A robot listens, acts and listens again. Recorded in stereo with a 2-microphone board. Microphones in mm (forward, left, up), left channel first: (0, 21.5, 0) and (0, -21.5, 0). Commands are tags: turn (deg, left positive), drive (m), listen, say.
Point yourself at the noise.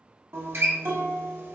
<turn deg="-75"/>
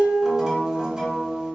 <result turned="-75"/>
<turn deg="-20"/>
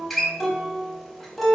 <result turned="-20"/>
<say>Found it: a guitar, straight ahead.</say>